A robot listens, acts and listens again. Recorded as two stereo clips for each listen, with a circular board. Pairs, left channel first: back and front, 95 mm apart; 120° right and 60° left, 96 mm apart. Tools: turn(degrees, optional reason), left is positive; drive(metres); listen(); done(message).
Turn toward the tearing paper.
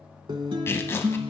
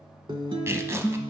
turn(degrees=120, reason="The tearing paper: 120° left.")
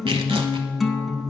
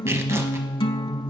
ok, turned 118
listen()
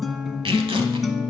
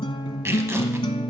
done("Facing the tearing paper, under 1 m away.")